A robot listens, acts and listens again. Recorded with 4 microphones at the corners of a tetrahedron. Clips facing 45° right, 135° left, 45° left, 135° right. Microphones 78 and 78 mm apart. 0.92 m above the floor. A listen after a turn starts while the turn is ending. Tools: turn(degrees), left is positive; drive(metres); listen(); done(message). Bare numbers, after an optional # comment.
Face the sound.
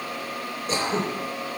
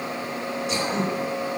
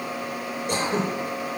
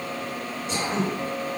done("Found it: throat clearing, straight ahead.")